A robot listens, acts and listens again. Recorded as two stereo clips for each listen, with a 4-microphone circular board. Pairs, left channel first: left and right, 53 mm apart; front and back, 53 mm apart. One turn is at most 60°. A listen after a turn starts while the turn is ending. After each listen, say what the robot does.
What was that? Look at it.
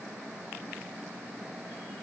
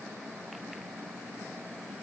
Keep listening.
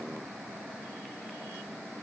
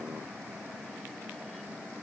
Keep listening.
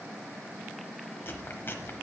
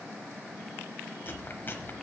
Turn 50° left.
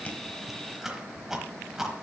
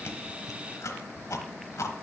Turn 10° right.
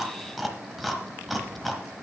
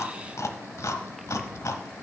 Found it: chewing, straight ahead.